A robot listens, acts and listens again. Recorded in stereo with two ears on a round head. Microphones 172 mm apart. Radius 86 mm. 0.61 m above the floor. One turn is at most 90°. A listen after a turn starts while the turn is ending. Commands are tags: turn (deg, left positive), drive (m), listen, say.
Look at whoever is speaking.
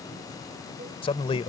<turn deg="30"/>
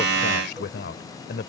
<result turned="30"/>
<turn deg="90"/>
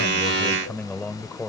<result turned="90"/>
<say>Found it: a man speaking, straight ahead.</say>